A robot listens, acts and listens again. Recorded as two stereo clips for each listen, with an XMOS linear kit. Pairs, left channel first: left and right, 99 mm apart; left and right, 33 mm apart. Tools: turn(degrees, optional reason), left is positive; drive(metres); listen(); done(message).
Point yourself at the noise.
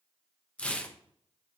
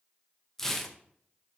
turn(degrees=30)
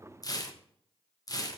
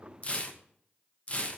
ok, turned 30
turn(degrees=140, reason="So it is at 140° left.")
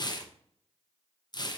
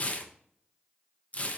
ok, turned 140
turn(degrees=45, reason="The tearing paper is now 45° left.")
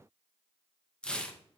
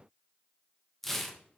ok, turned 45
turn(degrees=10, reason="The tearing paper is now 10° left.")
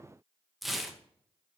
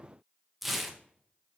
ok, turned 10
done("Facing the tearing paper.")